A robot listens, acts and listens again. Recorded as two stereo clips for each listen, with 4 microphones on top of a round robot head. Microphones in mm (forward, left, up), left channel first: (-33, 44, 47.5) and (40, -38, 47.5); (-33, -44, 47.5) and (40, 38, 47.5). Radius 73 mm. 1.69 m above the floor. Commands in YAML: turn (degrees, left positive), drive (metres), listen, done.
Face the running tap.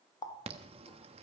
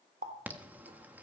turn: 80
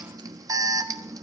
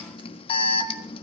listen: true
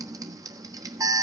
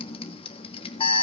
listen: true
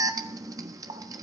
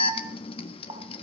done: "Found it: a running tap, straight ahead, 1 to 2 m away."